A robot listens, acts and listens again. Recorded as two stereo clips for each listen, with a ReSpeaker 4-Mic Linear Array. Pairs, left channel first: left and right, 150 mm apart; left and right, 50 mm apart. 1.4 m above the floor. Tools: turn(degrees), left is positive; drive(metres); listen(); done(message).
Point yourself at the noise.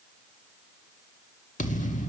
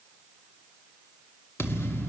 turn(degrees=50)
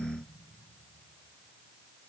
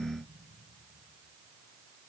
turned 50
listen()
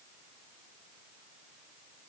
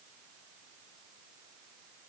done("I heard a thud, but can't make it out now. It was about straight ahead or 80° left.")